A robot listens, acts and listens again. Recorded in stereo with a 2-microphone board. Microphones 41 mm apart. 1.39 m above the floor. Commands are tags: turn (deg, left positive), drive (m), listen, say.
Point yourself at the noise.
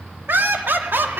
<turn deg="-60"/>
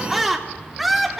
<say>Found it: laughter, straight ahead.</say>